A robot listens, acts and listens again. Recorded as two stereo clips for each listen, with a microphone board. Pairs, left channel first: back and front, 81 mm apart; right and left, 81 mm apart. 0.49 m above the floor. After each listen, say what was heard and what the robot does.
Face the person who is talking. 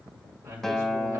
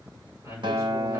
The man speaking: 45° left. Turn 45° left.
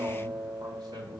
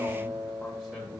Keep listening.
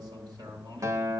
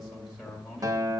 Found it: a man speaking, straight ahead, 2 to 4 m away.